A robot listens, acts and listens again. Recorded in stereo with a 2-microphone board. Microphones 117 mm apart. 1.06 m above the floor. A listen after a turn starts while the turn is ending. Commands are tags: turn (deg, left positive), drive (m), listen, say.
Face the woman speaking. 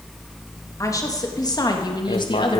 <turn deg="45"/>
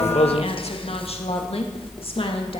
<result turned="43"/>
<turn deg="55"/>
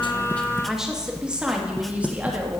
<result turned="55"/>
<turn deg="-15"/>
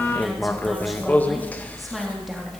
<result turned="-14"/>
<listen/>
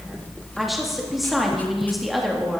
<say>Found it: a woman speaking, straight ahead, 2 to 4 m away.</say>